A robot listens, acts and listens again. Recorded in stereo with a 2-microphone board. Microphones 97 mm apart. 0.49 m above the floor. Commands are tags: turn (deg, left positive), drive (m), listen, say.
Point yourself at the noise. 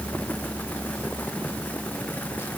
<listen/>
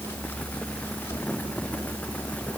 <listen/>
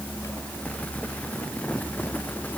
<say>I can't make out anything.</say>